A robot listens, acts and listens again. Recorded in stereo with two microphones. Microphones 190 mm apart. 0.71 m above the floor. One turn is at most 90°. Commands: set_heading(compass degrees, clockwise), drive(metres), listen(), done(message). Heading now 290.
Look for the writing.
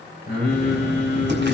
set_heading(0)
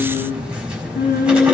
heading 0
done("Found it: writing, straight ahead.")